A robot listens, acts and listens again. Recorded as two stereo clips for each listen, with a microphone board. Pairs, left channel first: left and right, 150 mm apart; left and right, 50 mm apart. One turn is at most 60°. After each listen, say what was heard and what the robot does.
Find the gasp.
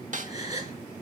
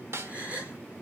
The gasp: about 25° right or 155° right. Turn 25° right.
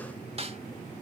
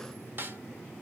Keep listening.
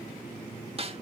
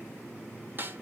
I heard a gasp, but can't make it out now. It was about straight ahead or 130° right.